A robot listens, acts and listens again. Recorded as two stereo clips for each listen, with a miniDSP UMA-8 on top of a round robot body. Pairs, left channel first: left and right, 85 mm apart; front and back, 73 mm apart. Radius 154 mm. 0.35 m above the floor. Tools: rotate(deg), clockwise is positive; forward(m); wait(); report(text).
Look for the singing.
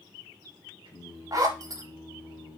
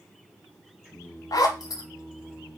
rotate(105)
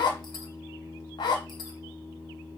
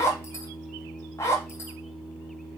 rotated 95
rotate(10)
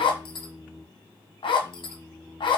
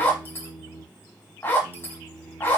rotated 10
report("Facing the singing.")